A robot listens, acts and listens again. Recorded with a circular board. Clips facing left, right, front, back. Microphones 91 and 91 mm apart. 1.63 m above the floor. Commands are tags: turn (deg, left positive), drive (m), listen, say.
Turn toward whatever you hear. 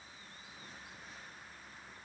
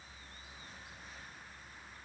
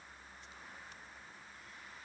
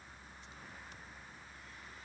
<listen/>
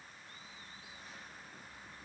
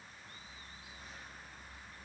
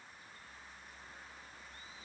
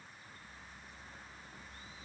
<listen/>
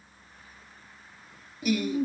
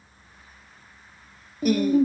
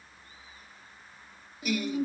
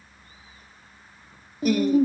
<turn deg="-135"/>
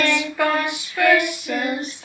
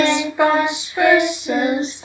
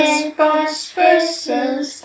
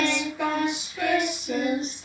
<turn deg="-20"/>
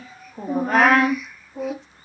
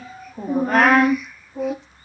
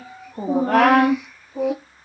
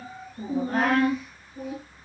<say>Found it: singing, straight ahead.</say>